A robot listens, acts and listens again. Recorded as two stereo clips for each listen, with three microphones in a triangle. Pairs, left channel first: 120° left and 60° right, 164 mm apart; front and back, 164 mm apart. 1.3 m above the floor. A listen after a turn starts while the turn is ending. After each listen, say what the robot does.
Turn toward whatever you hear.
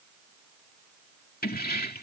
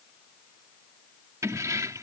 Turn 110° left.
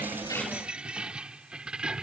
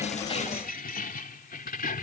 Turn 25° left.
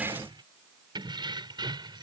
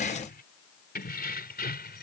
Found it: keys jangling, straight ahead.